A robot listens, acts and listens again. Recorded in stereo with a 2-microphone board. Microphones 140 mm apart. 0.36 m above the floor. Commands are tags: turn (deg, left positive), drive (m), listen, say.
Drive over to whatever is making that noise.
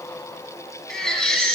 <turn deg="30"/>
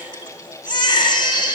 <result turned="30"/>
<turn deg="145"/>
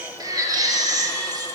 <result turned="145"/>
<turn deg="-30"/>
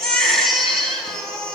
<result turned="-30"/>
<drive m="1.0"/>
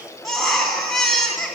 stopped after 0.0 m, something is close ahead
<say>Something is in my way. I am facing the baby crying but have not reached it.</say>